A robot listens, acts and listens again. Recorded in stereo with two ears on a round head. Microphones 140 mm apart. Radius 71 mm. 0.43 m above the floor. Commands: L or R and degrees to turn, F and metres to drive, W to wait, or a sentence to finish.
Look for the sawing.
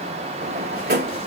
W
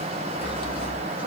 R30
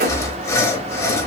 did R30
L20
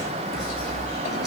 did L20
Found it: sawing, straight ahead, under 1 m away.